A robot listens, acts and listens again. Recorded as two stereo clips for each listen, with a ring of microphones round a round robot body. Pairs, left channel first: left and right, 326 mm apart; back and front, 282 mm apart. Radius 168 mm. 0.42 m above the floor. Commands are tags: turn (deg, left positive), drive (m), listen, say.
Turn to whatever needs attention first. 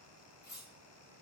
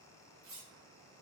<listen/>
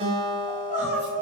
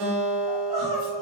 <turn deg="80"/>
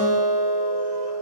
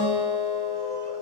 <listen/>
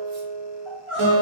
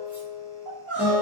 <say>Found it: crying, straight ahead, 1 to 2 m away.</say>